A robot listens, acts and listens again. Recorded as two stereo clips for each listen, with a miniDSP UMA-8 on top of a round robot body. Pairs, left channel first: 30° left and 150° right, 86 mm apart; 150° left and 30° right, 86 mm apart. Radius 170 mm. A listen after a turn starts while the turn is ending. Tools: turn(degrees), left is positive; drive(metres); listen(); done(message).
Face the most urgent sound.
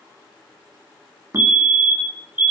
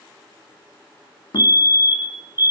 turn(degrees=-85)
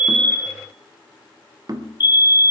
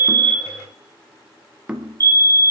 done("Found it: a fire alarm, straight ahead.")